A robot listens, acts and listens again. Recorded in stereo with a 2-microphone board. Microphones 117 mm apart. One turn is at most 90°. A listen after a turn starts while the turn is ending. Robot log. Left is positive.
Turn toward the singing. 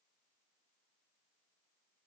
cmd idle
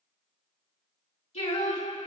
note: The singing: about 65° left or 115° left.
cmd yaw +65
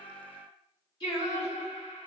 note: So it is at 45° left.
cmd yaw +45
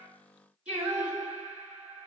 note: The singing is now 10° right.
cmd yaw -10
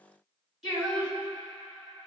end: Found it: singing, straight ahead, 2 to 4 m away.